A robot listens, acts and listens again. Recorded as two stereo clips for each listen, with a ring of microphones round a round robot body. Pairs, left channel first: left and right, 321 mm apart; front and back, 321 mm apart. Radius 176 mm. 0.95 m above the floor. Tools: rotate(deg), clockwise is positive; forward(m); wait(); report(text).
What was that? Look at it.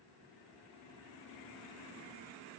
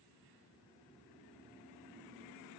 wait()
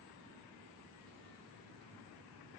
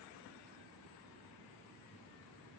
wait()
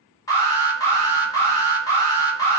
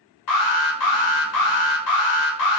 rotate(-10)
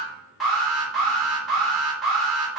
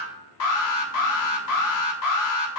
report("Found it: an alarm, straight ahead, under 1 m away.")